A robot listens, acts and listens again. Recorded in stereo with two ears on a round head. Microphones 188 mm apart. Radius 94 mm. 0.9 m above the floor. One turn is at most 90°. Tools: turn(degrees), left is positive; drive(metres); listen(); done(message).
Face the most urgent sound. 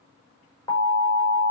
turn(degrees=15)
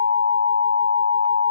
turn(degrees=90)
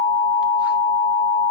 turn(degrees=55)
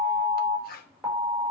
done("Found it: an alarm, straight ahead, over 4 m away.")